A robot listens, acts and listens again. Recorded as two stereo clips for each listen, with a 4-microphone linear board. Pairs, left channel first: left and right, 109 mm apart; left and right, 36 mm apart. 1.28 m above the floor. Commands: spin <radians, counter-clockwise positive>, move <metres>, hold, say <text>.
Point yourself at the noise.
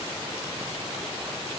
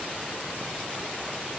hold
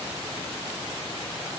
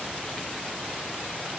hold
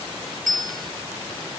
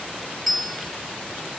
spin 0.52
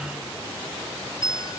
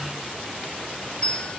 spin 2.53
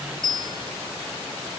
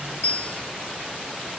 spin 0.79
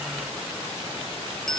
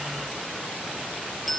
say Facing the bell.